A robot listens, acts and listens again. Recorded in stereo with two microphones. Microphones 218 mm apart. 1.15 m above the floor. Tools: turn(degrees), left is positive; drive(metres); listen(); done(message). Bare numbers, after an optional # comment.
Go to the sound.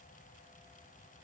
listen()
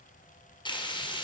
# The frying: about 20° left or 160° left.
turn(20)
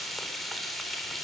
drive(1.0)
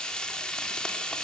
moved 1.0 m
drive(1.0)
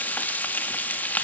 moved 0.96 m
# The frying is now 10° left.
turn(10)
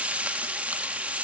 drive(1.0)
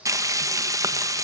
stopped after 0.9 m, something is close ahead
# The frying is now 15° right.
turn(-15)
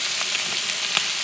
done("I am next to the frying.")